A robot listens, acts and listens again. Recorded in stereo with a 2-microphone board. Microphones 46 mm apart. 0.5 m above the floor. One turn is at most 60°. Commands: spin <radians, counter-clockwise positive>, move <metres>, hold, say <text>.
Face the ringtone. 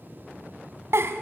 hold
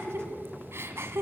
hold
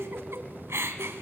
say I can't make out a ringtone to turn to.